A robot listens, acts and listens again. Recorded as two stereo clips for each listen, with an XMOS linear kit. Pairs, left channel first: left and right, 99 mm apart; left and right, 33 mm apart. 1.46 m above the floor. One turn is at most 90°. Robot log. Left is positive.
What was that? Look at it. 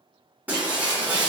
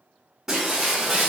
note: The breaking glass: about 15° right or 165° right.
cmd yaw -15
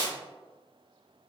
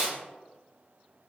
note: So it is at 150° right.
cmd yaw -90
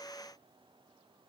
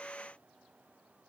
note: Nothing new. It was at 60° right.
cmd yaw -60
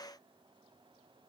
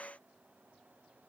end: Facing where the breaking glass came from. I can't hear it now.